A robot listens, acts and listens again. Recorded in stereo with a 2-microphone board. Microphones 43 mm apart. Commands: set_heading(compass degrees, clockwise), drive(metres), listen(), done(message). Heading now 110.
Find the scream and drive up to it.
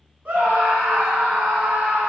set_heading(145)
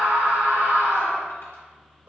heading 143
set_heading(253)
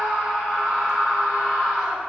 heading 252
drive(1.0)
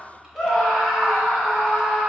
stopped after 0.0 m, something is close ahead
done("Something is in my way. I am facing the scream but have not reached it.")